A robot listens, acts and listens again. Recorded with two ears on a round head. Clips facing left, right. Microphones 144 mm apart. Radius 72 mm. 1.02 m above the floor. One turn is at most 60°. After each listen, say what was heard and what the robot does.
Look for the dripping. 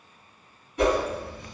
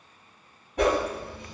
The dripping: about 65° left or 115° left. Turn 60° left.
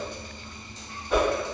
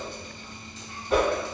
So it is at 40° left. Turn 40° left.
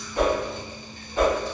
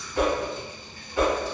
The dripping is now 10° left. Turn 10° left.
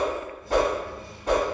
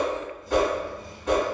Found it: dripping, straight ahead.